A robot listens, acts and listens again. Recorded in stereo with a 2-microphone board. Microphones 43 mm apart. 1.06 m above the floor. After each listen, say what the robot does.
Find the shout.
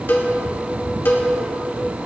Keep listening.
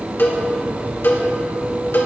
Keep listening.
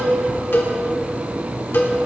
I can't make out a shout, only a cowbell.